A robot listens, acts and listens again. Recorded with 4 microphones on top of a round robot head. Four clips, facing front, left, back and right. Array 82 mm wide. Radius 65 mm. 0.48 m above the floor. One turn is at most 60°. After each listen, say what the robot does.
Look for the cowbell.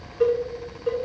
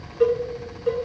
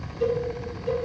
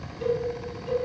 Turn 50° left.
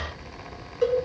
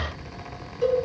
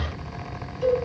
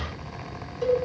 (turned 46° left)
Facing the cowbell, 2 to 4 m away.